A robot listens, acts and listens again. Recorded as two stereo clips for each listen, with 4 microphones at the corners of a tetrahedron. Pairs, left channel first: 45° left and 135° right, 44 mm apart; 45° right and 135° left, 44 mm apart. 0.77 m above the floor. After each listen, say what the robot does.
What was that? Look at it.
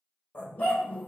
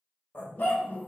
Found it: a dog barking, straight ahead.